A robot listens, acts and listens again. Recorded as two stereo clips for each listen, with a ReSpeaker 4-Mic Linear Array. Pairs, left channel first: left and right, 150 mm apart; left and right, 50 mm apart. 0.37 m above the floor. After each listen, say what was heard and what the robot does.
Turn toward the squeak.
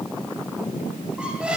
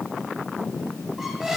Turn 30° right.
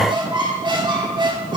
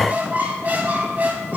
So it is at 145° right. Turn 145° right.
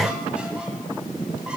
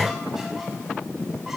The squeak is now 10° right. Turn 10° right.
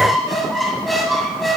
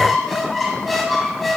Facing the squeak, 1 to 2 m away.